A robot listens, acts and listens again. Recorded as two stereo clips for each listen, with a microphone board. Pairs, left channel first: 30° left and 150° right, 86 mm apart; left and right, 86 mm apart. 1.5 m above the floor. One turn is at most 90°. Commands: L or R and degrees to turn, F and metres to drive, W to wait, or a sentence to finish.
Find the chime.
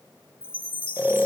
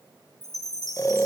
L50
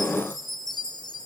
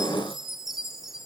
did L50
Found it: a chime, straight ahead, 2 to 4 m away.